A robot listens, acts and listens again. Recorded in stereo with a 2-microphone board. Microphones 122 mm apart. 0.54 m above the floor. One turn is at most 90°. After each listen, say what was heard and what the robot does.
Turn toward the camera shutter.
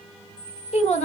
Turn 30° left.
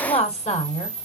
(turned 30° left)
So it is at 25° right. Turn 25° right.
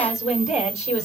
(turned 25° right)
Facing the camera shutter.